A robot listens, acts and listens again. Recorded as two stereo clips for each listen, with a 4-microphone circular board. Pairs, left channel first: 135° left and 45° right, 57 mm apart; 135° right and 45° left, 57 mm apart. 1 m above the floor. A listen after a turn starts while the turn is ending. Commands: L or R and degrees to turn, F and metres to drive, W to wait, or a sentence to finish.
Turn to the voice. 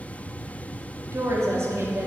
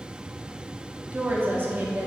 Facing the woman speaking.